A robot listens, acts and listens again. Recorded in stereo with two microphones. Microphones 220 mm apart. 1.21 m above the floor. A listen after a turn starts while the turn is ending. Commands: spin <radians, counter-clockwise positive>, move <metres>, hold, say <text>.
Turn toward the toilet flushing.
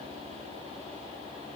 hold
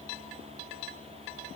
hold
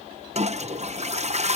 spin -0.52
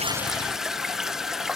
say Facing the toilet flushing.